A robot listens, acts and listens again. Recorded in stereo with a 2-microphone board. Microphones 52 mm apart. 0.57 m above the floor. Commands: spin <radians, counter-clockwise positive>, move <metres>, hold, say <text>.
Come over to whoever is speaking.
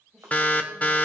spin -0.52
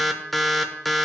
hold
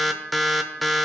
hold
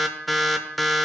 say I heard a woman speaking, but can't make it out now. It was about 25° left or 145° right. I did not reach it.